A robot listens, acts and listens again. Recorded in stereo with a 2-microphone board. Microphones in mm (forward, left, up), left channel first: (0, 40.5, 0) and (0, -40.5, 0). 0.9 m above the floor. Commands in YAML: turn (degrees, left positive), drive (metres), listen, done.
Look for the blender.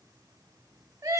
listen: true
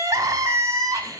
listen: true
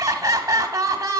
done: "I can't make out a blender, only crying."